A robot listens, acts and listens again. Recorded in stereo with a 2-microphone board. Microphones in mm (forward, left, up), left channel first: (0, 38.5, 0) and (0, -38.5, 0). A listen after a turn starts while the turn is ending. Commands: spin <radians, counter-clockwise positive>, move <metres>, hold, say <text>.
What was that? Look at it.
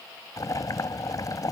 spin 0.87
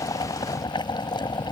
spin 1.40
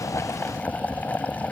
spin 0.35
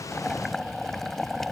say Facing the boiling.